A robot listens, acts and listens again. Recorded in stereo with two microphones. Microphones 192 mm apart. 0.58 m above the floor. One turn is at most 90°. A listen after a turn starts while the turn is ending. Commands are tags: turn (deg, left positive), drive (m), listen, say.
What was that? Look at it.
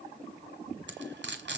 <turn deg="-70"/>
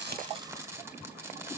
<turn deg="-15"/>
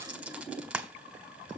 <say>Facing the frying, 1 to 2 m away.</say>